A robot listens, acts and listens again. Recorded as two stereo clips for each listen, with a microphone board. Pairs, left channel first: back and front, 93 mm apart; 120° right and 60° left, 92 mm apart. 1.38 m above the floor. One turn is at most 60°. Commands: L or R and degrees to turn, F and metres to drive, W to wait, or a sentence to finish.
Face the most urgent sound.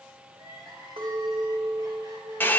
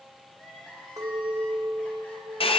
R45
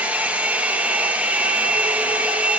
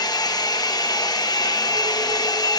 W
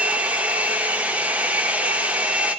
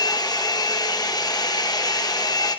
W
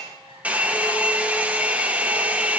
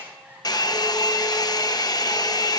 I heard crying from this way, but can't make it out now.